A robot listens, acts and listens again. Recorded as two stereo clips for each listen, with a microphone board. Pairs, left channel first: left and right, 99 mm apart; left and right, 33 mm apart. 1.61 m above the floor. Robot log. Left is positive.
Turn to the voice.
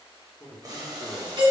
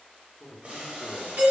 cmd yaw +30
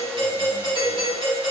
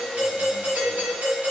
cmd idle
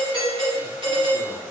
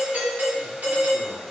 cmd idle
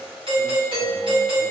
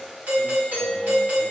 end: I heard a man speaking, but can't make it out now. It was about 25° right or 145° left.